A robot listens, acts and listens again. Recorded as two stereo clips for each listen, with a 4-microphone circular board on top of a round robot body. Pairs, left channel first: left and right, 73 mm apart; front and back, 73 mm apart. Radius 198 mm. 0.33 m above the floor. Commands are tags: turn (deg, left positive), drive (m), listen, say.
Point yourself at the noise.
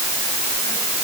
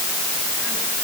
<listen/>
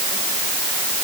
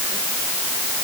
<listen/>
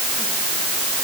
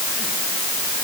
<say>I can't make out anything.</say>